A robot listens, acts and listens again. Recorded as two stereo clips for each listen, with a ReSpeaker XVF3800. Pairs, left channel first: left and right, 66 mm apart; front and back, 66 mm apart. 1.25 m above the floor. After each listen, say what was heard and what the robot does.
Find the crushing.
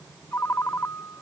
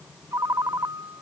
Keep listening.
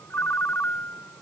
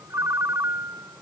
Keep listening.
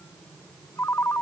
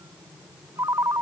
I can't make out crushing, only a ringtone.